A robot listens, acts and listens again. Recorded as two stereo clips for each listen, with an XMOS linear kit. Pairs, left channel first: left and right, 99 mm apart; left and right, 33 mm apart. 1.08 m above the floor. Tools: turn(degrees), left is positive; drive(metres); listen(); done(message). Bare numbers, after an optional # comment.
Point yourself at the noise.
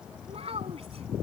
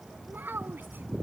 turn(-90)
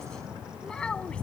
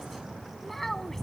# So it is at 10° left.
turn(10)
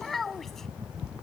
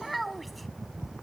done("Found it: a child speaking, straight ahead.")